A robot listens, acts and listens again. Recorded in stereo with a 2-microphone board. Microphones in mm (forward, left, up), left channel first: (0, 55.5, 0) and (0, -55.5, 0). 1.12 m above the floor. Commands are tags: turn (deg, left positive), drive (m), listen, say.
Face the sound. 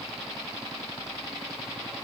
<listen/>
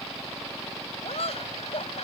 <turn deg="65"/>
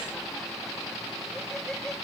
<listen/>
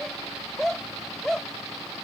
<say>Facing the laughter.</say>